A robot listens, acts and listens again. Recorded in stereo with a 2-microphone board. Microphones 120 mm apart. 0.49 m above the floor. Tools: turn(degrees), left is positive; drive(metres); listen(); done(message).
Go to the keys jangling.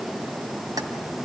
listen()
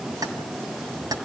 turn(degrees=-30)
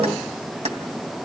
turn(degrees=-115)
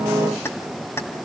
turn(degrees=20)
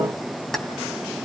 drive(metres=1.0)
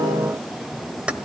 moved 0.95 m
turn(degrees=-10)
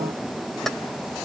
drive(metres=1.0)
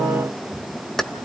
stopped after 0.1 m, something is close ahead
done("Arrived at the keys jangling, straight ahead.")